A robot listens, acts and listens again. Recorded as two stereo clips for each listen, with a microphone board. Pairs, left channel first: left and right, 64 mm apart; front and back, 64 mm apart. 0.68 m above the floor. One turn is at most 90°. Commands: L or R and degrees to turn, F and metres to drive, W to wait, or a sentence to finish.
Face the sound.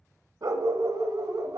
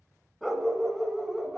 R90
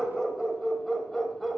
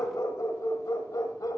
Found it: a dog barking, straight ahead, 1 to 2 m away.